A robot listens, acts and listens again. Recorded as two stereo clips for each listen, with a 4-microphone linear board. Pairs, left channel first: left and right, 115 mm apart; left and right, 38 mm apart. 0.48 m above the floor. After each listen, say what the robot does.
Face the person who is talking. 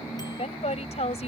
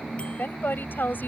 Turn 70° left.
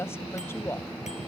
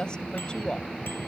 Turn 25° left.
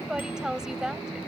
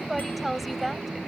Facing the woman speaking.